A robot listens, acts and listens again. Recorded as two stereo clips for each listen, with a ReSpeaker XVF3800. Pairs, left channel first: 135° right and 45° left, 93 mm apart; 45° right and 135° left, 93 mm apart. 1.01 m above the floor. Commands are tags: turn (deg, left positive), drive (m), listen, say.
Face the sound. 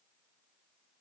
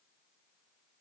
<listen/>
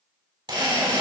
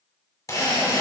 <turn deg="10"/>
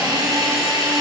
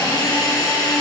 <say>Facing the drill.</say>